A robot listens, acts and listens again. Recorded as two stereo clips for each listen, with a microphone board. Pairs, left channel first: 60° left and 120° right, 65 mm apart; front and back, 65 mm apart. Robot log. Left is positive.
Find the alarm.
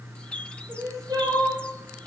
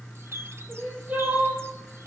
cmd idle
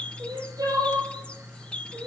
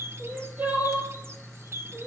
cmd idle
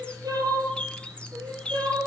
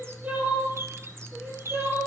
end: I can't make out an alarm, only a bird and crying.